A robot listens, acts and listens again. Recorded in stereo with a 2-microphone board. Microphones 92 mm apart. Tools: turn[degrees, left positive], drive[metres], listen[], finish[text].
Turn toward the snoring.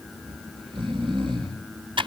Thought: The snoring: about 65° right or 115° right.
Action: turn[-65]
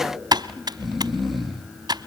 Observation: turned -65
Action: finish[Found it: snoring, straight ahead, 2 to 4 m away.]